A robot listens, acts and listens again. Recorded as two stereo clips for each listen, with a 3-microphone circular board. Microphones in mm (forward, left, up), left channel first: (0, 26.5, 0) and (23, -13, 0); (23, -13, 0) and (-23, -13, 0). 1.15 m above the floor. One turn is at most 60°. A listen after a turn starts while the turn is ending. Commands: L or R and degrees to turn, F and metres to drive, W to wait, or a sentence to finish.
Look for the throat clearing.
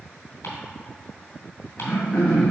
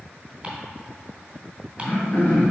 L55
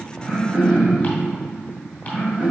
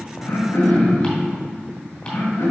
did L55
Found it: throat clearing, straight ahead, 1 to 2 m away.